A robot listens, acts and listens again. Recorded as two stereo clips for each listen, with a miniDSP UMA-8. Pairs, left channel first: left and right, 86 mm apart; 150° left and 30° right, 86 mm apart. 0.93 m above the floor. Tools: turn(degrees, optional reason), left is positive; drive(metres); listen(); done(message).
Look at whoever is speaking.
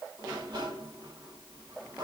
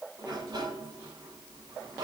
listen()
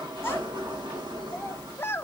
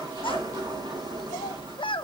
turn(degrees=155, reason="The child speaking: 155° left.")
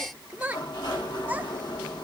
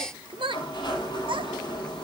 turn(degrees=-20, reason="The child speaking is now 20° right.")
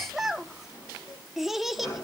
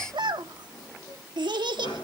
done("Facing the child speaking, 1 to 2 m away.")